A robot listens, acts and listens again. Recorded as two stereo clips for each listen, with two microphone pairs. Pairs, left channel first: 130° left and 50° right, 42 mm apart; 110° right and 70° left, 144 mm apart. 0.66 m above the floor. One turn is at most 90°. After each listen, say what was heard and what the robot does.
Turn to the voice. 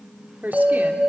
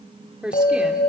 The woman speaking: 15° right. Turn 15° right.
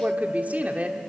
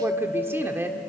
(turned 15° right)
Found it: a woman speaking, straight ahead.